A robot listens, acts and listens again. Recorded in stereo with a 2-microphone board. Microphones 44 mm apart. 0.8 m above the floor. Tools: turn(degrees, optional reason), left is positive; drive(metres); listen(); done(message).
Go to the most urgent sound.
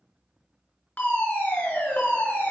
turn(degrees=35, reason="The fire alarm: about 35° left or 145° left.")
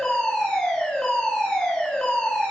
turn(degrees=10, reason="So it is at 10° left.")
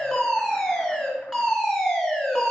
drive(metres=1.0)
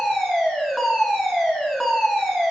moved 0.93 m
drive(metres=1.0)
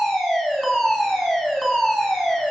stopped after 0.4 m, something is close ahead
done("I am next to the fire alarm.")